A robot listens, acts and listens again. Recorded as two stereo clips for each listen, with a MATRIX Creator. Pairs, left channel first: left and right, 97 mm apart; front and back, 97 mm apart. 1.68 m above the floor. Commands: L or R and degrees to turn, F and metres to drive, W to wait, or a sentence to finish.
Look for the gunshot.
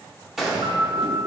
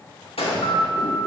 Found it: a gunshot, straight ahead.